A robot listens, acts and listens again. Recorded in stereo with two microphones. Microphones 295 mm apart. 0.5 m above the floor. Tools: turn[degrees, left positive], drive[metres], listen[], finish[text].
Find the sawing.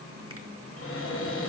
Action: listen[]
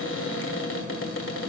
Action: listen[]
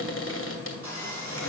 Thought: The sawing: about 70° right or 110° right.
Action: turn[-70]
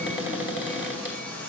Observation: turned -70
Action: finish[Facing the sawing.]